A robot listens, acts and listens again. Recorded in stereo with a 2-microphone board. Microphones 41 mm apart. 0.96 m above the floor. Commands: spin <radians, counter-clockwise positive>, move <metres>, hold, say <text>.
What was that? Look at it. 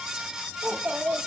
spin -0.87
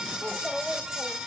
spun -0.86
spin -0.17
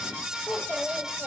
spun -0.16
spin -0.26
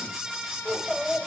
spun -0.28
spin -0.17
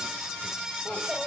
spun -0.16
spin -0.17
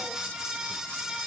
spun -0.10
hold
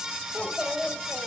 say Found it: a child speaking, straight ahead, 2 to 4 m away.